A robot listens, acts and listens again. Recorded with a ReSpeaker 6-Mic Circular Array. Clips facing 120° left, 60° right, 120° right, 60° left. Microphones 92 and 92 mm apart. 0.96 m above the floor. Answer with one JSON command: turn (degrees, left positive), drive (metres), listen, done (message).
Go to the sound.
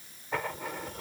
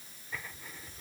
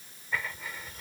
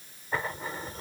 {"turn": 115}
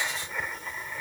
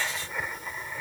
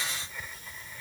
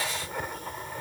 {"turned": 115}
{"turn": 25}
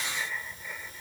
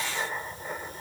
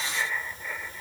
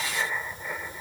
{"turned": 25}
{"turn": -15}
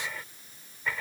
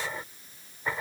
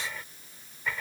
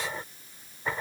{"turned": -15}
{"drive": 1.0}
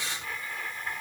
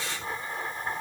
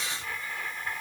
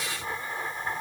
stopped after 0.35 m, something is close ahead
{"done": "Blocked. The writing is further on, straight ahead."}